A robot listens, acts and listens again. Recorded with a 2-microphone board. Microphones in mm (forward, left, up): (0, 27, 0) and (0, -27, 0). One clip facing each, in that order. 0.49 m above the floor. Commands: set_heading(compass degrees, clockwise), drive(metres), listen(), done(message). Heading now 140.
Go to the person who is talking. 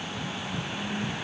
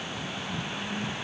listen()
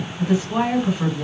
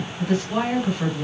set_heading(110)
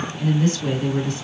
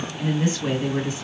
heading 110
set_heading(130)
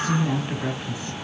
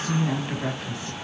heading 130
drive(1.0)
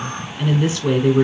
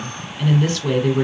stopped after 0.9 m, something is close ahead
set_heading(120)
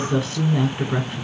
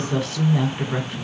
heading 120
done("I am next to the woman speaking.")